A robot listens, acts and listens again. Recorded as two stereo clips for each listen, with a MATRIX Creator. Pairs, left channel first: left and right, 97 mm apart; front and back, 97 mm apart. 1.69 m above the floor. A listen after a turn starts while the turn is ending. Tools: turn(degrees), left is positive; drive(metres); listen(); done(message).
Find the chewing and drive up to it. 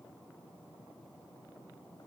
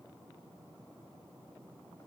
listen()
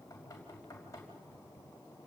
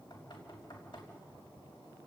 listen()
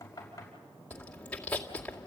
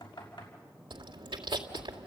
turn(degrees=165)
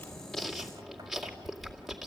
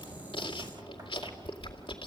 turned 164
drive(metres=1.0)
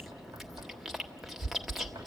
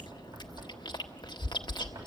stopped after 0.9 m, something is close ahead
done("I am next to the chewing.")